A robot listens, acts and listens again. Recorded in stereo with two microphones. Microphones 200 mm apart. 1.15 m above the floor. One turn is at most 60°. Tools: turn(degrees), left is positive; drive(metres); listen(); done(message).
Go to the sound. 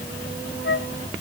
turn(degrees=60)
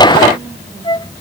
turn(degrees=25)
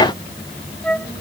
drive(metres=1.0)
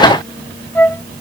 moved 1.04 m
turn(degrees=10)
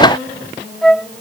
drive(metres=1.0)
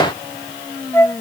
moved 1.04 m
turn(degrees=10)
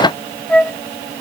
drive(metres=1.0)
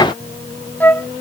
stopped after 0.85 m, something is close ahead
turn(degrees=10)
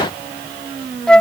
done("Arrived at the flute, straight ahead.")